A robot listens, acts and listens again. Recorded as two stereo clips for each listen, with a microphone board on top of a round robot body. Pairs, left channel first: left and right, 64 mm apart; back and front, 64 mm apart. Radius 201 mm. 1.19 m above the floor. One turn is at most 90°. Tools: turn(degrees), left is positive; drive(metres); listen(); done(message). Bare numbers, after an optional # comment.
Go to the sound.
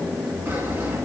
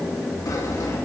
# The sawing: 150° right.
turn(-90)
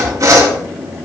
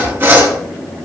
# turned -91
# The sawing is now 60° right.
turn(-60)
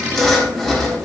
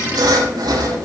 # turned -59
drive(1.0)
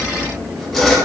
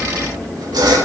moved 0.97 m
drive(1.0)
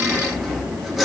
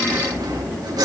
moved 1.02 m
drive(1.0)
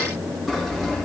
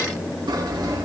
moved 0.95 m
drive(1.0)
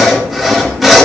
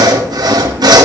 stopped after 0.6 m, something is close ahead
done("Arrived at the sawing, straight ahead.")